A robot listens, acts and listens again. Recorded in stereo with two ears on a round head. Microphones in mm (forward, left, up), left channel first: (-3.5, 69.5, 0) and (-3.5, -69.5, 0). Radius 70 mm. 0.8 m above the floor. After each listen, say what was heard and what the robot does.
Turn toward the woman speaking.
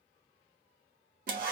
Keep listening.
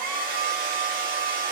Keep listening.
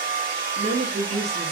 The woman speaking: about 45° right or 135° right. Turn 45° right.
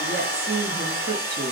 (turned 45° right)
So it is at 85° right. Turn 85° right.
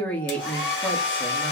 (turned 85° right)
The woman speaking is now 10° left. Turn 10° left.
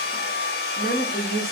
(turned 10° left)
Facing the woman speaking.